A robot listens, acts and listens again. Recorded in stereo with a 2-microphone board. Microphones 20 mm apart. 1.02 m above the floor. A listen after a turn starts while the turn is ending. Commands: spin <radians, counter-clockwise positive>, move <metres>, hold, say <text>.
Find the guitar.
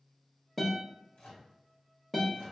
spin 0.52
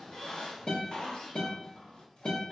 spin 2.53
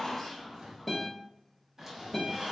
spin 0.17
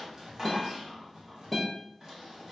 say Found it: a guitar, straight ahead, 1 to 2 m away.